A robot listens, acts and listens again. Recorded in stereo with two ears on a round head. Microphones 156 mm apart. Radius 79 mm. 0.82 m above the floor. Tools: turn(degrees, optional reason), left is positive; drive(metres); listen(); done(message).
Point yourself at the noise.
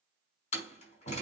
turn(degrees=40, reason="The door slam: about 40° left or 140° left.")
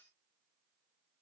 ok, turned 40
listen()
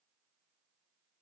done("I heard a door slam, but can't make it out now. It was about straight ahead or 100° left.")